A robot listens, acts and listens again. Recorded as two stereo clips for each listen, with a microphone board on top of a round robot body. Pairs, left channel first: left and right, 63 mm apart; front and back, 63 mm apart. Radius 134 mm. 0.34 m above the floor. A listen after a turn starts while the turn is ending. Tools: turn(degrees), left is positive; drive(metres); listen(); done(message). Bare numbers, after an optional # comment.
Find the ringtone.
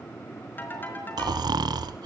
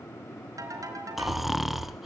# The ringtone: 150° left.
turn(150)
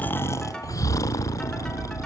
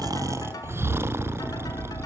listen()
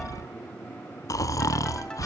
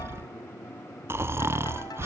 listen()
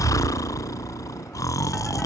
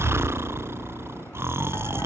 done("I heard a ringtone from this way, but can't make it out now.")